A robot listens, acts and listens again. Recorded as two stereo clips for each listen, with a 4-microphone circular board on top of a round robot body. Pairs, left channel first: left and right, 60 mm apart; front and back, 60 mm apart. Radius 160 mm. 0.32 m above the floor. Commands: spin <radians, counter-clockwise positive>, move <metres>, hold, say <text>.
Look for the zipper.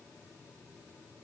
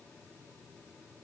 hold
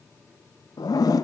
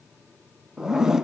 spin 1.66
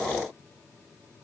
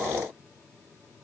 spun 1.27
spin 0.44
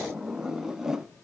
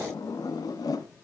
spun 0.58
spin -0.17
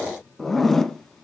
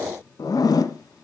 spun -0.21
say Found it: a zipper, straight ahead, 1 to 2 m away.